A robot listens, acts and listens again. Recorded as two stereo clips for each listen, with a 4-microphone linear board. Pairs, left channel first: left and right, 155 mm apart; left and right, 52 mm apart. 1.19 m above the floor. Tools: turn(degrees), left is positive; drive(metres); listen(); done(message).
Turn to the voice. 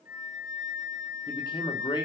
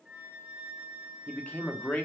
turn(degrees=30)
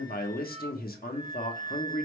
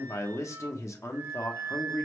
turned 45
turn(degrees=105)
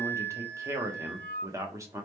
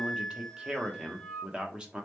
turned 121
turn(degrees=-20)
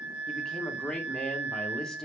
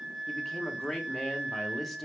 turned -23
done("Found it: a man speaking, straight ahead, 1 to 2 m away.")